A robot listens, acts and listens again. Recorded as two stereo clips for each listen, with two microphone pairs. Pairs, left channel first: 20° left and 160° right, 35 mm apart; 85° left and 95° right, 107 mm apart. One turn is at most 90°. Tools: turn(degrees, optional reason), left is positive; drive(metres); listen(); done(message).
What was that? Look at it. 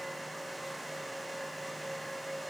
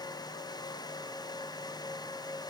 listen()
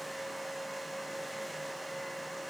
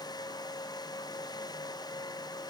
listen()
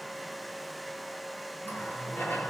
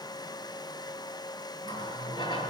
turn(degrees=40, reason="The running tap: 40° left.")
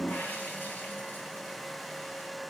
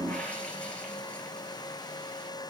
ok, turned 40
done("Facing the running tap, over 4 m away.")